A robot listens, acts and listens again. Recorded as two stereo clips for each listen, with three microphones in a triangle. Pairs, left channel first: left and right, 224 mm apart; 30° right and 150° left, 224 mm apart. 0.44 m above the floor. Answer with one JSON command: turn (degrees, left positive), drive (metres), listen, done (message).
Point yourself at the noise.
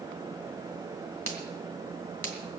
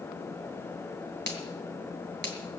{"turn": -70}
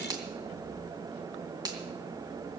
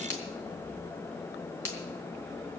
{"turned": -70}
{"turn": -15}
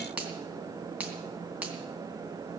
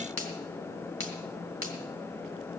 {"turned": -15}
{"done": "Found it: a finger snap, straight ahead."}